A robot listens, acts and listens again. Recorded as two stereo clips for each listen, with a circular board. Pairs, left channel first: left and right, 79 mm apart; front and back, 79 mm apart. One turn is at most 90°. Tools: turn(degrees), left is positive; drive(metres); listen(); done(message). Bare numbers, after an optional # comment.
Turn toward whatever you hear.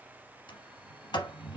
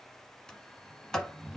# The sliding door: 85° left.
turn(85)
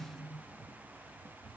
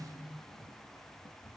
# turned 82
done("Facing the sliding door, 1 to 2 m away.")